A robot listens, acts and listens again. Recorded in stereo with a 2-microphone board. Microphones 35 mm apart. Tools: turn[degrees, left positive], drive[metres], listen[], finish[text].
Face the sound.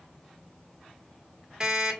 Thought: The alarm clock: about 20° right or 160° right.
Action: turn[-20]
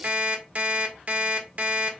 Thought: So it is at 135° right.
Action: turn[-135]
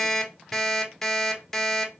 Thought: The alarm clock is now 10° left.
Action: turn[10]
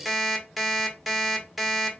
Action: finish[Found it: an alarm clock, straight ahead, 1 to 2 m away.]